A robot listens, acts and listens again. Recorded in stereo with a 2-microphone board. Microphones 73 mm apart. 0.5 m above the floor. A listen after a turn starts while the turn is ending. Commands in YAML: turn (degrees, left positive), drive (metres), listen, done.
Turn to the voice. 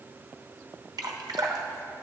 listen: true
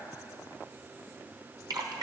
listen: true
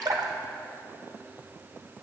done: "I can't make out anyone speaking to turn to."